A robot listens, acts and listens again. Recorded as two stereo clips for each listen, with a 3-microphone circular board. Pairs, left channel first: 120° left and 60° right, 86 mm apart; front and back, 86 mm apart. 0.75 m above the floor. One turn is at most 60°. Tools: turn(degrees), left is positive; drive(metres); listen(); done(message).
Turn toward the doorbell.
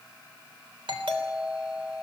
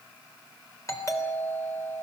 turn(degrees=-50)
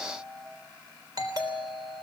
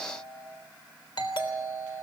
turn(degrees=-20)
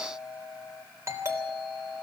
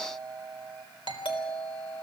done("Found it: a doorbell, straight ahead, 2 to 4 m away.")